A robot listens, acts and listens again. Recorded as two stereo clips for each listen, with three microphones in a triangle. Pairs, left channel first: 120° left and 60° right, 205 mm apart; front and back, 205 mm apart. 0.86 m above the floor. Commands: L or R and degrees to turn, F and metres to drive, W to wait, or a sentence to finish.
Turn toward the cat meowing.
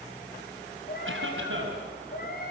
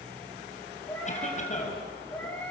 L80
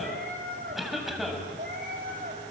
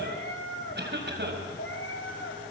R15
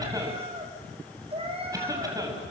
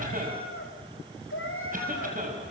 Facing the cat meowing.